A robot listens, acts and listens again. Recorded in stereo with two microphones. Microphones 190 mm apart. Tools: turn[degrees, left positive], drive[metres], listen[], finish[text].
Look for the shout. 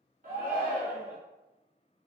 Thought: The shout: about 45° right or 135° right.
Action: turn[-45]
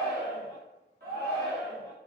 Thought: So it is at 80° right.
Action: turn[-80]
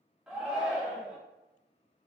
Action: finish[Facing the shout, 1 to 2 m away.]